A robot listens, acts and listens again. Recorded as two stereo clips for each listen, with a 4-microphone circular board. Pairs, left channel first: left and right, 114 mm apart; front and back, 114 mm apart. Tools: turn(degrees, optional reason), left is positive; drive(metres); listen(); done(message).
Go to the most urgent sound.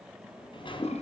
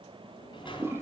listen()
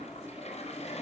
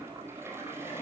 listen()
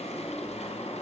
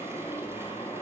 done("I can't make out anything urgent to turn to.")